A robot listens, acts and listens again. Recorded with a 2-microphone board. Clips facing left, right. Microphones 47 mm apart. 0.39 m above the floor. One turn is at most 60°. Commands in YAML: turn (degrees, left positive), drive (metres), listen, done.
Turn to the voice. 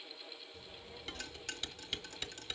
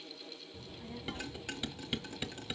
turn: -25
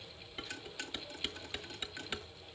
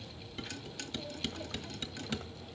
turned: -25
turn: -60
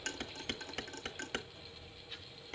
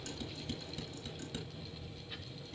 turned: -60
turn: -10
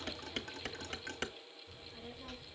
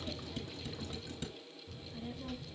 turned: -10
done: "Found it: a child speaking, straight ahead."